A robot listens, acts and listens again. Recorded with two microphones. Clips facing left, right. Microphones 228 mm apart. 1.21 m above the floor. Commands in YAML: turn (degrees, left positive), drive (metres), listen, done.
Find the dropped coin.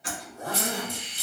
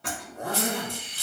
turn: 20
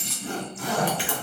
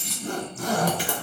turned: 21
done: "Facing the dropped coin, 1 to 2 m away."